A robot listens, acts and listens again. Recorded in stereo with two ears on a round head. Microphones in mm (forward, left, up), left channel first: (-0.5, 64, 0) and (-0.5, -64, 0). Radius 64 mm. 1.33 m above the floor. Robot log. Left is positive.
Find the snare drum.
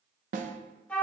note: The snare drum: about 55° right or 125° right.
cmd yaw -55
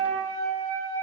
cmd idle
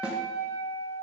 cmd idle
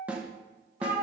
note: So it is at 10° right.
cmd yaw -10
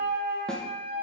cmd idle
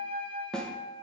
end: Facing the snare drum.